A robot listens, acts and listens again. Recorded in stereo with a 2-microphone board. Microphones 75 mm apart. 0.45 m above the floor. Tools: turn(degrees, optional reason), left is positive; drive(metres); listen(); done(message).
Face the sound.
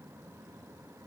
listen()
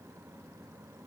listen()
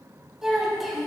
turn(degrees=30)
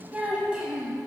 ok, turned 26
turn(degrees=-30)
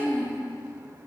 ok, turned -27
turn(degrees=30, reason="So it is at 30° left.")
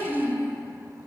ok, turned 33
turn(degrees=15, reason="The child speaking is now 15° left.")
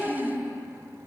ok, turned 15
done("Facing the child speaking.")